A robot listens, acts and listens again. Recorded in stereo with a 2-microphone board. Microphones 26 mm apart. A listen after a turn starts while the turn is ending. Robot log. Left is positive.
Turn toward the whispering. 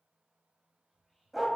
cmd yaw +30
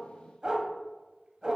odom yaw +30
cmd idle
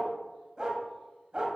cmd idle
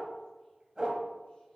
end: I heard whispering, but can't make it out now. It was about 15° right or 135° left.